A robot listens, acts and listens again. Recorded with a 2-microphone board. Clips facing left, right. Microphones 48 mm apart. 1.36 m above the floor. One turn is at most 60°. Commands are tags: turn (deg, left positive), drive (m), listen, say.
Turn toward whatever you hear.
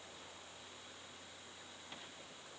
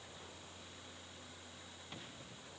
<listen/>
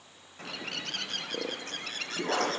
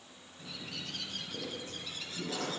<turn deg="60"/>
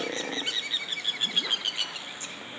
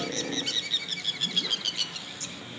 <turn deg="25"/>
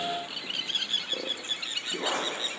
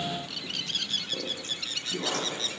<turn deg="20"/>
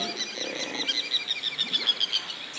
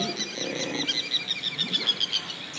<say>Found it: a bird, straight ahead, under 1 m away.</say>